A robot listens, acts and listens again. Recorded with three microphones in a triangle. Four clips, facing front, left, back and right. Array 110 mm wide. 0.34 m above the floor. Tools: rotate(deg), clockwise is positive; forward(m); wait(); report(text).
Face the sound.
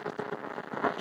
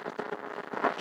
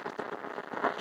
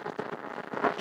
wait()
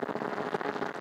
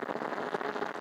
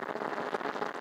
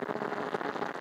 wait()
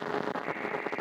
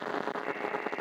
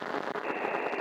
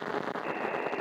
rotate(150)
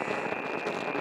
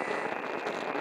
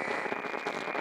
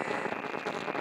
rotate(-45)
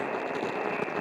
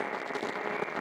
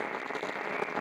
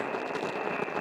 rotate(25)
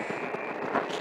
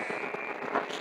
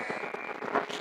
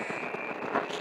report("Found it: a buzzer, straight ahead.")